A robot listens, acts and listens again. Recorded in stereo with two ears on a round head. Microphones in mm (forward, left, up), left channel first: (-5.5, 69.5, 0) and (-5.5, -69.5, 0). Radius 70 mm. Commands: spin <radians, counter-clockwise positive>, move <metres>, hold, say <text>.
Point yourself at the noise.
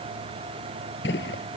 spin 1.57
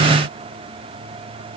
say I heard a gunshot from this way, but can't make it out now.